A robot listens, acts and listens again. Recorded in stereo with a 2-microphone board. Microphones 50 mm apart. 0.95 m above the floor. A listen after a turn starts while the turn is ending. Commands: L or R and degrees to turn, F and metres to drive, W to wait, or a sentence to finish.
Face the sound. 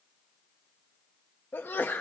L40
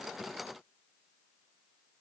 W
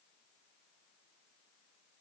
I heard a sneeze, but can't make it out now. It was about straight ahead or 100° left.